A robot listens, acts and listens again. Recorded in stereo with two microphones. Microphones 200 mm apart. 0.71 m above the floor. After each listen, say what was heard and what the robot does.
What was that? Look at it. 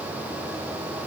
Keep listening.
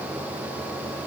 Keep listening.
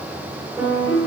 Turn 30° left.
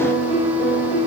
So it is at 150° left. Turn 150° left.
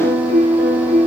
The piano is now 35° right. Turn 35° right.
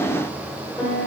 Found it: a piano, straight ahead, 1 to 2 m away.